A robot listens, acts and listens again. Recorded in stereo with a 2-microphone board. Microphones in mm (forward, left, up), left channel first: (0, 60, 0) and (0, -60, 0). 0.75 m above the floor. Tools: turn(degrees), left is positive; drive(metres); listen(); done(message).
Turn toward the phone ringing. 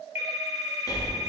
turn(degrees=70)
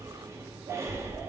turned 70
listen()
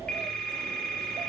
turn(degrees=10)
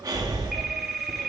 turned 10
done("Facing the phone ringing, 1 to 2 m away.")